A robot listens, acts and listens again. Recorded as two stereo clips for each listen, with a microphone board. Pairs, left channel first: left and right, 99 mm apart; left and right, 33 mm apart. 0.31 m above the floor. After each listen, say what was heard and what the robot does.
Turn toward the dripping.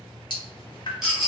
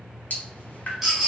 The dripping: about 55° left or 125° left. Turn 55° left.
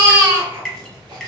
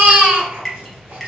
Found it: dripping, straight ahead, 1 to 2 m away.